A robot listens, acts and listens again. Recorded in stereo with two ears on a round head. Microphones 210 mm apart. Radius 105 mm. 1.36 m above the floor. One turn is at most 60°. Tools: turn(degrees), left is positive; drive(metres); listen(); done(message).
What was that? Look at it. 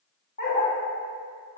turn(degrees=35)
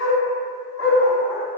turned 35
turn(degrees=60)
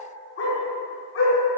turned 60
turn(degrees=55)
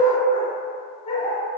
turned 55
turn(degrees=20)
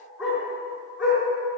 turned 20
done("Found it: a dog barking, straight ahead, over 4 m away.")